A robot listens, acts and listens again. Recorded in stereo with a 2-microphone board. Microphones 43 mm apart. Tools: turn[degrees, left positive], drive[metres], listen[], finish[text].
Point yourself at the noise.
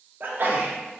Thought: The sneeze: about 50° right or 130° right.
Action: turn[-50]
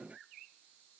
Action: listen[]
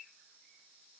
Action: finish[I heard a sneeze, but can't make it out now. It was about straight ahead or 80° right.]